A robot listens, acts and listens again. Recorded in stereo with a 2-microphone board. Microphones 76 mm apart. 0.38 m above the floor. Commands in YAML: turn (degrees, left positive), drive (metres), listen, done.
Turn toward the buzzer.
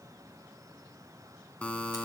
turn: 15
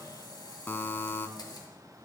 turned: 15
turn: 150
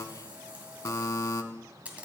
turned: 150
turn: 45
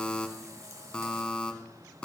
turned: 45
turn: 15
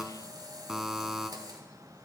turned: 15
done: "Facing the buzzer, under 1 m away."